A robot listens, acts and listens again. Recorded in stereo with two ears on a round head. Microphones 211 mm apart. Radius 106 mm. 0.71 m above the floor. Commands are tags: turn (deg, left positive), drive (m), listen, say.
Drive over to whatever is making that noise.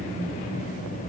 <listen/>
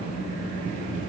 <listen/>
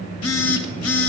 <turn deg="70"/>
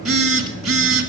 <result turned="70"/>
<drive m="1.0"/>
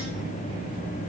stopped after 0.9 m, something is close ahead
<listen/>
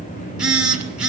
<say>Arrived at the phone buzzing, straight ahead.</say>